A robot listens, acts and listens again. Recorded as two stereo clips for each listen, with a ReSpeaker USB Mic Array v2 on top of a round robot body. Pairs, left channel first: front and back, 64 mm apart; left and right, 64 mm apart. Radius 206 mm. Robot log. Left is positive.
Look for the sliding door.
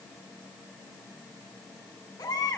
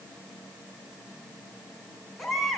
cmd idle
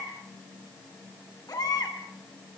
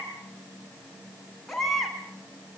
cmd idle
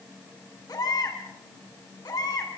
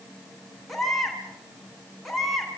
end: I can't make out a sliding door, only a baby crying.